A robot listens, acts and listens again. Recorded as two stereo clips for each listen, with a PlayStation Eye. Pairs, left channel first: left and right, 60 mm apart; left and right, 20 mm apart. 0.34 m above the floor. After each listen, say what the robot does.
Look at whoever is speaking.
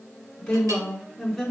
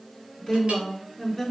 Turn 30° left.
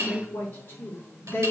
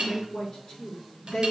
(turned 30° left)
Turn 150° left.
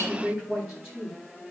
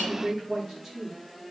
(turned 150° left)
Turn 10° right.
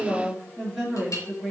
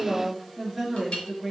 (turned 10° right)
Facing the woman speaking.